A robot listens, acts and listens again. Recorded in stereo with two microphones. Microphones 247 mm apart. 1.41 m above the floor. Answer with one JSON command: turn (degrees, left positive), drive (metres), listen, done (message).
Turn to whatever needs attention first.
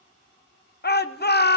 {"turn": 40}
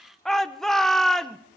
{"done": "Facing the shout."}